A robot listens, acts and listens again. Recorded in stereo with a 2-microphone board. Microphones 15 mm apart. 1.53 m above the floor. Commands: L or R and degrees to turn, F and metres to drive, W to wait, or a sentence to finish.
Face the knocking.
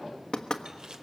L60
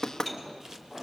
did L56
L40
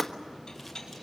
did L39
Found it: knocking, straight ahead, 1 to 2 m away.